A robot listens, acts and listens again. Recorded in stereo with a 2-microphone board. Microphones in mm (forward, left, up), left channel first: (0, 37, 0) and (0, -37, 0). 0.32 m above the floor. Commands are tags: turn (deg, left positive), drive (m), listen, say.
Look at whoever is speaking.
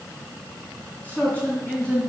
<turn deg="20"/>
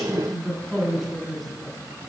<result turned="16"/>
<turn deg="-30"/>
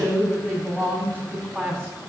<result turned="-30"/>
<turn deg="10"/>
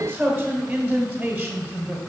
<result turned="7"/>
<turn deg="-10"/>
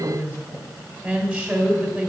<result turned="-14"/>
<say>Facing the man speaking.</say>